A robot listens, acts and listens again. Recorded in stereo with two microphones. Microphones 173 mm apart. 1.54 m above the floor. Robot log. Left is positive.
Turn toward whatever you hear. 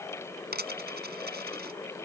note: The dropped coin: about 70° right or 110° right.
cmd yaw -70
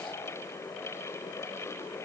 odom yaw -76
cmd idle
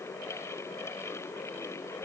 end: I heard a dropped coin, but can't make it out now. It was about 5° left or 35° right.